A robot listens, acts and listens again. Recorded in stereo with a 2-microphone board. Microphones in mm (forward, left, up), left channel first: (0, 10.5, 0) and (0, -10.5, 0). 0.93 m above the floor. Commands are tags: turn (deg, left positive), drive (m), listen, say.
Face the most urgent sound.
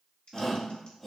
<turn deg="30"/>
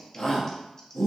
<turn deg="150"/>
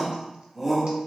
<say>Facing the shout.</say>